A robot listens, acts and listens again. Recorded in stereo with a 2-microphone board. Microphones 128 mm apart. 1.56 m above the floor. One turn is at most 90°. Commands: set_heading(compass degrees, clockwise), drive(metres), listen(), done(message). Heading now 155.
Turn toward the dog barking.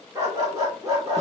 set_heading(185)
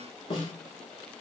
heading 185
listen()
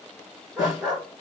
set_heading(195)
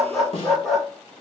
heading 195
done("Found it: a dog barking, straight ahead.")